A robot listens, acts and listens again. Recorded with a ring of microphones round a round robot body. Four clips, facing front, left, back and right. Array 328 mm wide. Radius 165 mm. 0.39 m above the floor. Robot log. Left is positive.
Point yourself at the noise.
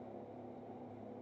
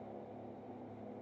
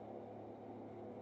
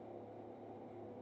cmd idle
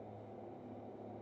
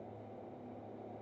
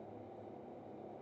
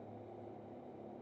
cmd idle
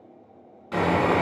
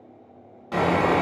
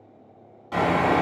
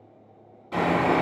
note: The sawing: 70° left.
cmd yaw +70
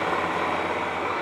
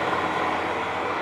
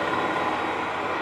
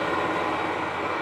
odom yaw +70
note: The sawing is now 10° left.
cmd yaw +10
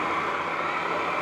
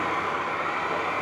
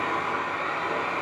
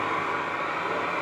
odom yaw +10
end: Facing the sawing, 1 to 2 m away.